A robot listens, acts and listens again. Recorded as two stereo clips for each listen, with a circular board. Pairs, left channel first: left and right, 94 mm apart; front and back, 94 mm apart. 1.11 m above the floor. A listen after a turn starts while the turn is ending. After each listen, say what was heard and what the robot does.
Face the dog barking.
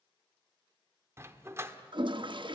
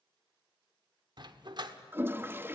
The dog barking: 150° right. Turn 150° right.
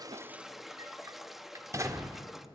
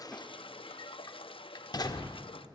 The dog barking is now 40° right. Turn 40° right.
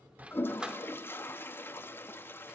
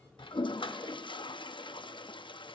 Keep listening.
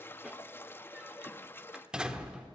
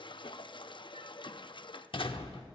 The dog barking is now 10° right. Turn 10° right.
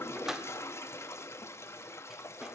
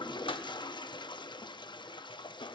Facing the dog barking, 1 to 2 m away.